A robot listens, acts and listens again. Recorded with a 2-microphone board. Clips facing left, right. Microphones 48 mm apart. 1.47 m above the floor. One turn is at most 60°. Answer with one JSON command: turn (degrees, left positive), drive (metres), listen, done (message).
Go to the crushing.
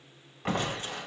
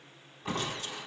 {"turn": 60}
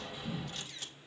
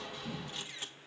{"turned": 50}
{"turn": 10}
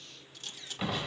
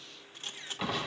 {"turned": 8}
{"drive": 1.0}
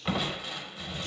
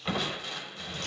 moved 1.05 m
{"turn": 10}
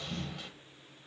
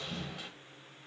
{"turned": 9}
{"drive": 1.0}
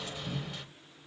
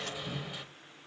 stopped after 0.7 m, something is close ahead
{"done": "Arrived at the crushing, straight ahead."}